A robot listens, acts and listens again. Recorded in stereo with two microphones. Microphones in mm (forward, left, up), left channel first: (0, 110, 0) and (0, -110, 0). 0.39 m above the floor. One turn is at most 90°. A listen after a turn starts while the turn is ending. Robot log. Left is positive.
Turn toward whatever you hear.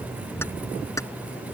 cmd yaw +30
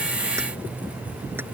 cmd idle
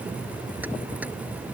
cmd idle
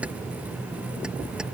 end: I heard keys jangling, but can't make it out now. It was about 15° right or 135° left.